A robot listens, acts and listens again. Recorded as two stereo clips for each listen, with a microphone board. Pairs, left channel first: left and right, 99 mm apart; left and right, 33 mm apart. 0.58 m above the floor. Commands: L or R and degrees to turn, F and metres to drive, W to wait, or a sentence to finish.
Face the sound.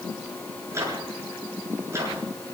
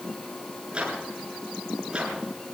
R30
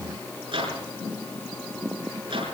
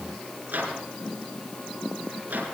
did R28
R120
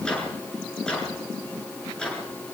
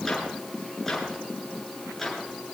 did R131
L10
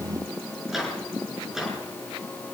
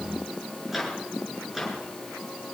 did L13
Found it: a microwave, straight ahead, over 4 m away.